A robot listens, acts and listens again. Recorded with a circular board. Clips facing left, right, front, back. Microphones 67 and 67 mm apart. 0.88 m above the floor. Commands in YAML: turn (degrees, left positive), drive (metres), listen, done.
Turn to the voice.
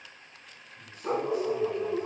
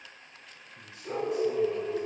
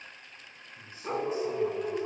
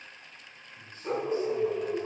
turn: -75
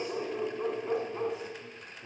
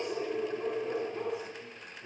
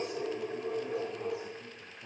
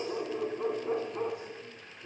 listen: true
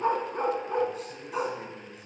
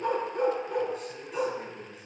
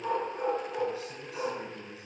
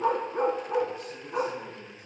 done: "Facing the man speaking."